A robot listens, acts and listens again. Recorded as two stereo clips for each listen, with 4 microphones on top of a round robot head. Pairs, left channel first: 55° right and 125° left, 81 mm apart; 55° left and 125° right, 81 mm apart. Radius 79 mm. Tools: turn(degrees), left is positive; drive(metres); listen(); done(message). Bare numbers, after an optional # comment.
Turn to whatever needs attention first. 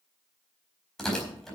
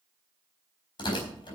listen()
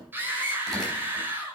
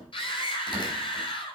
# The scream: 60° left.
turn(60)
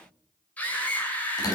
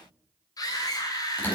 # The scream is now 15° left.
turn(15)
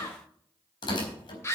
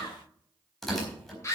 done("Found it: a scream, straight ahead, over 4 m away.")